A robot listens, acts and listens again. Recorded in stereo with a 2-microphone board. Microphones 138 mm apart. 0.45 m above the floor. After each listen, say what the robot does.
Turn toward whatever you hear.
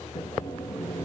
Turn 90° left.
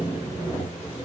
Turn 10° right.
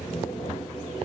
Facing the sawing.